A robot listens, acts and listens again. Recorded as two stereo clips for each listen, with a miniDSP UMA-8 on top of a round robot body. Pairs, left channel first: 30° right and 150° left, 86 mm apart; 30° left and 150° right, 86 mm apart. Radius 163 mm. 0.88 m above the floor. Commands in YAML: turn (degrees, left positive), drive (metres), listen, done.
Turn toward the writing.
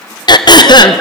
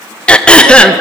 listen: true
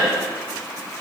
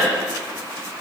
listen: true
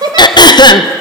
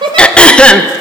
done: "I can't make out writing, only throat clearing and a giggle."